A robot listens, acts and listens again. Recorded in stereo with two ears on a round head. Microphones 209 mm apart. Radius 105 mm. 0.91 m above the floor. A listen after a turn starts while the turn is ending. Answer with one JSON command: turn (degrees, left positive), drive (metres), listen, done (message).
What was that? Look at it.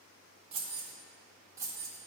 {"turn": -30}
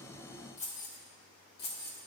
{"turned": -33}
{"turn": 45}
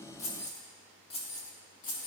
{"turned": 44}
{"turn": 35}
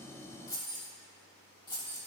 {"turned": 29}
{"turn": 20}
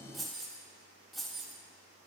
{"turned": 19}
{"done": "Found it: keys jangling, straight ahead, 1 to 2 m away."}